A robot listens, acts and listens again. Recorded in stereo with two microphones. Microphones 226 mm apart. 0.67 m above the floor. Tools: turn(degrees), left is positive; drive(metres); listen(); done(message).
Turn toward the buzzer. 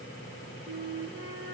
listen()
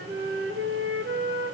listen()
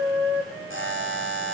turn(degrees=-60)
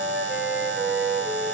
turn(degrees=-60)
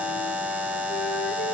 done("Facing the buzzer, 2 to 4 m away.")